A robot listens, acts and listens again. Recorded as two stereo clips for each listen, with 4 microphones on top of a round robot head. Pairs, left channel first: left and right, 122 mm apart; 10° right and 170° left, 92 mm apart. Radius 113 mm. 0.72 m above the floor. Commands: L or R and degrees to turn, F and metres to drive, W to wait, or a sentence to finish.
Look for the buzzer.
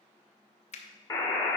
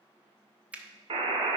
L150
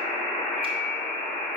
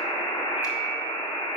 Found it: a buzzer, straight ahead, 1 to 2 m away.